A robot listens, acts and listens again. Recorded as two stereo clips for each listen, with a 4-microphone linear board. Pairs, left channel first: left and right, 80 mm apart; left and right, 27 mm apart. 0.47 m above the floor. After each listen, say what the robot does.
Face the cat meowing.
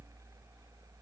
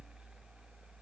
Keep listening.
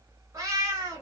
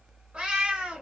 Turn 40° right.
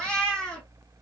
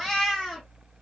Turn 10° left.
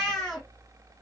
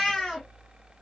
Facing the cat meowing.